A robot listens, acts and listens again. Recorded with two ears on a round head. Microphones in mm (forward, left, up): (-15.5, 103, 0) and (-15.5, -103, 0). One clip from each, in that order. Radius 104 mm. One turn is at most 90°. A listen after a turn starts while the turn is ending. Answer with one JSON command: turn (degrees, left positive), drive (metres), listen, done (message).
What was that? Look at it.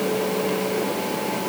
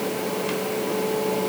{"listen": true}
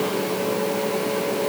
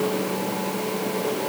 {"listen": true}
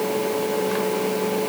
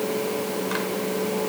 {"done": "I can't make out anything."}